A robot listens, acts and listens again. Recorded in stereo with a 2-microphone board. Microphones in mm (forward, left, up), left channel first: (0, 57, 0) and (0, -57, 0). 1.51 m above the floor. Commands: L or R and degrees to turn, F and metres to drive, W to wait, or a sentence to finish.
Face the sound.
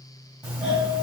R30
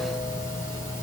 L20
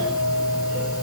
Found it: a doorbell, straight ahead.